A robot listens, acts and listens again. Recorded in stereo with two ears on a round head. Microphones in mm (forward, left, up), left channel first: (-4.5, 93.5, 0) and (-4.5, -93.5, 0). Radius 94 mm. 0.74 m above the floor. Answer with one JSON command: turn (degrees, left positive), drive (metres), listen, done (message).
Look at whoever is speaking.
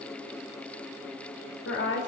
{"turn": 60}
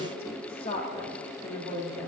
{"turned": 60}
{"turn": 30}
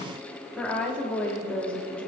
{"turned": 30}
{"done": "Facing the woman speaking, 1 to 2 m away."}